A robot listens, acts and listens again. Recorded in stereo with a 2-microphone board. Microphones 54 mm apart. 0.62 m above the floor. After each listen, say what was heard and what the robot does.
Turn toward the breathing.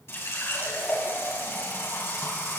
Keep listening.
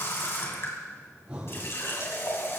The breathing: about 25° right or 155° right. Turn 25° right.
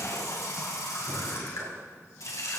Keep listening.
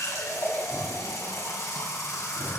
So it is at 135° right. Turn 135° right.
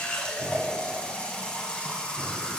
Keep listening.
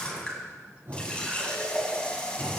The breathing is now 45° right. Turn 45° right.
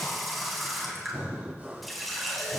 The breathing is now 25° right. Turn 25° right.
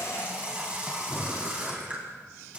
Found it: breathing, straight ahead.